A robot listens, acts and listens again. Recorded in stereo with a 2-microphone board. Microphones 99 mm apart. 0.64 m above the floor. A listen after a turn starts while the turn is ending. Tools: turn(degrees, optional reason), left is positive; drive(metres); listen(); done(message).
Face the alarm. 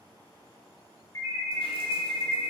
turn(degrees=30, reason="The alarm: about 30° left or 150° left.")
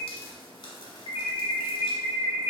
turn(degrees=115, reason="So it is at 115° left.")
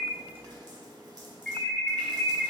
turn(degrees=10, reason="The alarm is now 10° left.")
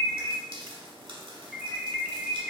done("Facing the alarm, 1 to 2 m away.")